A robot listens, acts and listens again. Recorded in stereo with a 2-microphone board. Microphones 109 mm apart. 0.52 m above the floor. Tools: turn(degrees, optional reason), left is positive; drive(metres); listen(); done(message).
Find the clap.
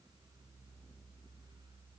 listen()
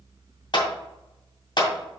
turn(degrees=45, reason="The clap: about 45° left or 135° left.")
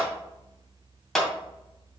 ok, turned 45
done("Found it: a clap, straight ahead.")